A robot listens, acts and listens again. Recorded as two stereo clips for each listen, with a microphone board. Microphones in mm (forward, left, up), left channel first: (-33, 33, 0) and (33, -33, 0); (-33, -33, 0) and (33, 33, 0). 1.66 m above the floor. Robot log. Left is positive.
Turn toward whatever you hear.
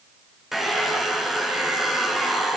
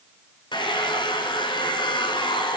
note: The hair dryer: 130° right.
cmd yaw -130
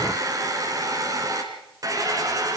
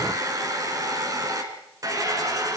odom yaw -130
end: Found it: a hair dryer, straight ahead, 2 to 4 m away.